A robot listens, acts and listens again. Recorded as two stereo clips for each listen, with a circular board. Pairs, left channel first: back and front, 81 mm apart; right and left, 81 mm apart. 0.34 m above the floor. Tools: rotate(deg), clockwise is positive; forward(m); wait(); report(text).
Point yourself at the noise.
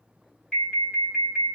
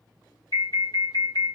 rotate(100)
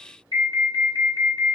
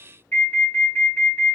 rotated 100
rotate(25)
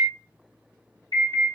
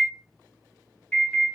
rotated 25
rotate(15)
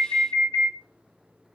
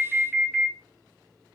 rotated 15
report("Facing the alarm.")